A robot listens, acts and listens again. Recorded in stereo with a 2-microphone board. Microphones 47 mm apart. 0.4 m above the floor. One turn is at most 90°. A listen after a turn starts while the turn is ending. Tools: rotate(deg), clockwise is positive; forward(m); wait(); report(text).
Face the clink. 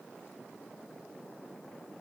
wait()
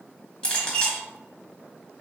rotate(-20)
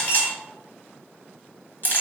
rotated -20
rotate(-90)
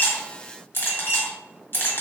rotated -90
rotate(-60)
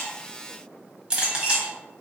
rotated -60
rotate(20)
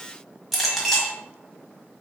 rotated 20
report("Facing the clink, 1 to 2 m away.")